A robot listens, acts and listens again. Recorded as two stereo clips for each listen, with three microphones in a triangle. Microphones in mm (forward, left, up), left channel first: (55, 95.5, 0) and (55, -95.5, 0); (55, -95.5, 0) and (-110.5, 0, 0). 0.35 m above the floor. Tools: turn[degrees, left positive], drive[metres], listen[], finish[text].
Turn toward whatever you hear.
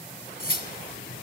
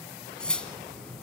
Thought: The cutlery clinking: 55° left.
Action: turn[55]
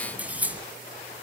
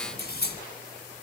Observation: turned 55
Thought: The cutlery clinking is now 10° right.
Action: turn[-10]
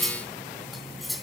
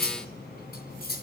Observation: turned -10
Action: finish[Facing the cutlery clinking.]